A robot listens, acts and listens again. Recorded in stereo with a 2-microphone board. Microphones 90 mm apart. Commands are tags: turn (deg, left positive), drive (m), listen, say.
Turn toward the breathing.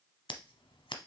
<listen/>
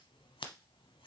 <listen/>
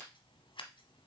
<say>I can't make out breathing to turn to.</say>